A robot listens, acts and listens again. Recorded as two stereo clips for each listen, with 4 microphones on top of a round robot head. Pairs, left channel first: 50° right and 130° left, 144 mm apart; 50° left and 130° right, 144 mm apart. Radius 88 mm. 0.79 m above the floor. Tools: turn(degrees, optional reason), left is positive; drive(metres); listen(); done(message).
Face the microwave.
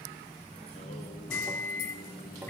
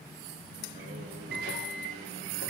turn(degrees=-125, reason="The microwave: 125° right.")
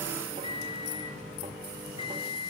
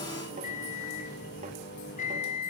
turn(degrees=10, reason="The microwave is now 10° left.")
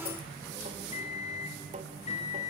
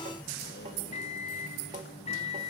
done("Found it: a microwave, straight ahead.")